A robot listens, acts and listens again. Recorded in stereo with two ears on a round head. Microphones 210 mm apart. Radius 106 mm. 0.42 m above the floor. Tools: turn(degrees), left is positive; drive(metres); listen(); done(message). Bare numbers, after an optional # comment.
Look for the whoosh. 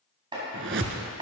# The whoosh: about 50° right or 130° right.
turn(-50)
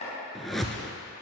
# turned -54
done("Found it: a whoosh, straight ahead.")